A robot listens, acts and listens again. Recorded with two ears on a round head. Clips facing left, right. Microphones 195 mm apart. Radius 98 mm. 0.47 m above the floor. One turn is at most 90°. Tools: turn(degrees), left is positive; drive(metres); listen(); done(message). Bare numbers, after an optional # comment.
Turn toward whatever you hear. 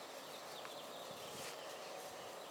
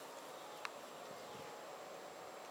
listen()
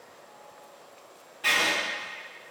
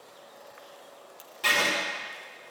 # The writing: about 60° right or 120° right.
turn(-60)
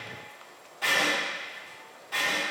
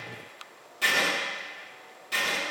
# So it is at 50° right.
turn(-50)
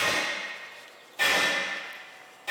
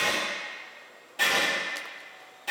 done("Facing the writing.")